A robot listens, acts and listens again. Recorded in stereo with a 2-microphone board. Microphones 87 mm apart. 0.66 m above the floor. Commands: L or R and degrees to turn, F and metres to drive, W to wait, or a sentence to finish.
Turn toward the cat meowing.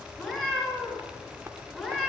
L30
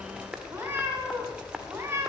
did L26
R25
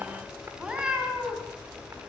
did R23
R10
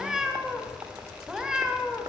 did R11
Facing the cat meowing.